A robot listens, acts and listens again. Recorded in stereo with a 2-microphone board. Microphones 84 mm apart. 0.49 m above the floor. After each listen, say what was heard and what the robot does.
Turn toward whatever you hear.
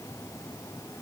Keep listening.
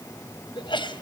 The sneeze: about 70° left or 110° left. Turn 70° left.
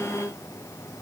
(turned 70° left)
Keep listening.
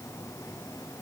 I heard a sneeze, but can't make it out now. It was about straight ahead or 40° left.